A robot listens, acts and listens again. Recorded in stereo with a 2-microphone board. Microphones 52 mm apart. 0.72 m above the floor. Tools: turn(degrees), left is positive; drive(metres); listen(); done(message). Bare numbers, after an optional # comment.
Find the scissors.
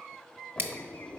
# The scissors: about 50° right or 130° right.
turn(-50)
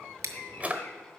# So it is at 80° right.
turn(-80)
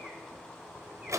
listen()
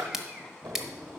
# The scissors is now 10° right.
turn(-10)
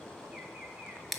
done("Facing the scissors, 1 to 2 m away.")